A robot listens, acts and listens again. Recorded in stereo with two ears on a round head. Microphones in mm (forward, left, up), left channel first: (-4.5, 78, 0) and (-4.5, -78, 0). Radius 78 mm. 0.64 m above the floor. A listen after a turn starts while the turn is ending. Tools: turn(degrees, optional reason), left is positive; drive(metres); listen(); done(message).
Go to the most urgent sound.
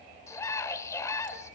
turn(degrees=20, reason="The scream: about 20° left or 160° left.")
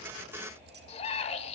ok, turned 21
turn(degrees=140, reason="So it is at 140° left.")
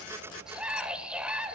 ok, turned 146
drive(metres=1.0)
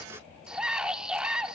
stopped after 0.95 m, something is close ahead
done("I am next to the scream.")